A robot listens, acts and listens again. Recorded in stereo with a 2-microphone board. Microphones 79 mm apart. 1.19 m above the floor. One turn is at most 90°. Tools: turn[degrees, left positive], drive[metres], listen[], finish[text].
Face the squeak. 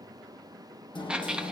Action: turn[-30]
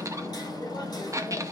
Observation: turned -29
Thought: So it is at 140° right.
Action: turn[-90]
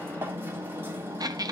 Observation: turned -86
Thought: The squeak is now 50° right.
Action: turn[-50]
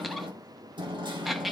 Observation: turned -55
Action: finish[Facing the squeak.]